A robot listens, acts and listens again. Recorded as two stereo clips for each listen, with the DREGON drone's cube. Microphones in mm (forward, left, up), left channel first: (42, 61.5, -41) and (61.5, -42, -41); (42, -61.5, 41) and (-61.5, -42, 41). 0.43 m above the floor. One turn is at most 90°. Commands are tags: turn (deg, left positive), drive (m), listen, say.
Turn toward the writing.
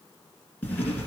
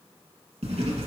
<turn deg="90"/>
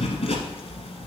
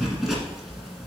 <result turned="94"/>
<turn deg="80"/>
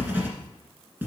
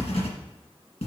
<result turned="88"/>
<turn deg="-10"/>
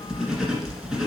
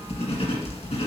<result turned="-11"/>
<say>Found it: writing, straight ahead.</say>